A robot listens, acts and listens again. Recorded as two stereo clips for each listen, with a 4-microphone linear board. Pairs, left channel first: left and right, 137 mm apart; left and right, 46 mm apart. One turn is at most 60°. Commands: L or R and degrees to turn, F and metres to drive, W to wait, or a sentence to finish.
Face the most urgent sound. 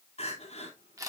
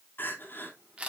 L50
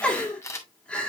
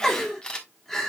L10
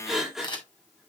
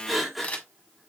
Found it: crying, straight ahead, 2 to 4 m away.